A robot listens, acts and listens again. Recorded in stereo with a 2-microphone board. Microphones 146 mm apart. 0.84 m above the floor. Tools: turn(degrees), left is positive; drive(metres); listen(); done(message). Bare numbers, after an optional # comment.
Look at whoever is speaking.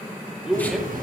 turn(30)
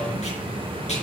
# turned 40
listen()
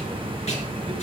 listen()
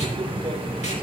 done("I heard a man speaking, but can't make it out now. It was about 40° right or 140° left.")